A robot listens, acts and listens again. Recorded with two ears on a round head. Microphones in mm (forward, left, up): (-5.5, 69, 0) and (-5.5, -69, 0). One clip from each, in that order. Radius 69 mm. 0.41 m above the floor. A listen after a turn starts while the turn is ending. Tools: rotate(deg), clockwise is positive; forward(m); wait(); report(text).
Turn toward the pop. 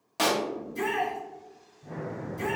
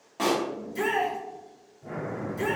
rotate(-90)
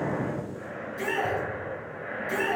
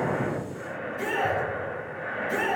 report("Facing where the pop came from. I can't hear it now.")